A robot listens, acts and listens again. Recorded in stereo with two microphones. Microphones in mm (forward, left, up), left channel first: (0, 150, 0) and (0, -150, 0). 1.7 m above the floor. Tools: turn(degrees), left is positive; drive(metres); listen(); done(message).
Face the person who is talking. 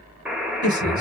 turn(degrees=70)
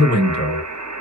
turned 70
turn(degrees=35)
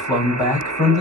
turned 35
turn(degrees=10)
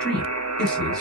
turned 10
done("Facing the man speaking, 2 to 4 m away.")